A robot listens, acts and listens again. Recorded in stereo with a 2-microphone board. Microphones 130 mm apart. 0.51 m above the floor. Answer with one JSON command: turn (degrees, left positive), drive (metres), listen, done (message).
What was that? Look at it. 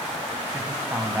{"turn": -30}
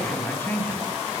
{"turn": 15}
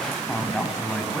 {"done": "Found it: a man speaking, straight ahead."}